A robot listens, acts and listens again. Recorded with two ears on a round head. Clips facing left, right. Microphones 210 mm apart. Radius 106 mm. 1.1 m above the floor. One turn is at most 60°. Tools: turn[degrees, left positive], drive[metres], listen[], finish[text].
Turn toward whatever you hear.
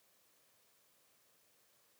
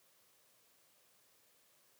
Action: listen[]
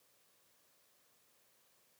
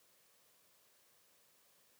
Action: listen[]
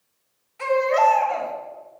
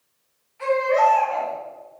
Thought: The baby crying: about 60° left or 120° left.
Action: turn[60]
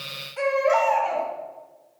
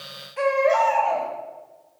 Action: finish[Found it: a baby crying, straight ahead.]